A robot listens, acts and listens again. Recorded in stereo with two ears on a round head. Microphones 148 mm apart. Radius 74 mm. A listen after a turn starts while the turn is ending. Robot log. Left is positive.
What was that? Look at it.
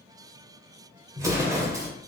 note: The explosion: about 20° right or 160° right.
cmd yaw -20
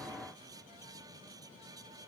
cmd idle
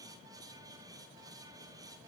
end: I heard an explosion, but can't make it out now. It was about straight ahead or 140° right.